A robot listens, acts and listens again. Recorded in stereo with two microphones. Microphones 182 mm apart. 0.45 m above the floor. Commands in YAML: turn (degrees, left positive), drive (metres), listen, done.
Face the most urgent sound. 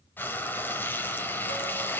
listen: true
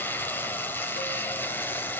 listen: true
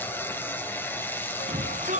turn: -45
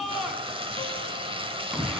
done: "Facing the shout, 2 to 4 m away."